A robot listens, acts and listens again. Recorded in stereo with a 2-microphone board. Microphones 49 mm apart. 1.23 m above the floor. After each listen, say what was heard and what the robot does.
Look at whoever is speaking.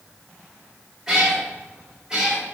Keep listening.
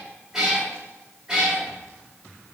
Keep listening.
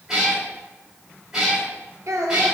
Turn 90° right.
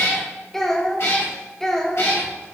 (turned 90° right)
So it is at 10° left. Turn 10° left.
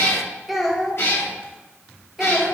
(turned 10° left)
Facing the child speaking, under 1 m away.